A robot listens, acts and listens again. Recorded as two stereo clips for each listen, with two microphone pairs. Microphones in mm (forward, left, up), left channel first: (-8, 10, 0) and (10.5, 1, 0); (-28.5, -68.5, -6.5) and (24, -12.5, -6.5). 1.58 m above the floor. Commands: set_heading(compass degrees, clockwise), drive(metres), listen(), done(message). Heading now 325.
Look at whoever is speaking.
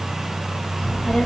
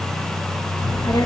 set_heading(135)
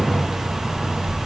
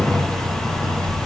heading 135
done("Found it: a child speaking, straight ahead.")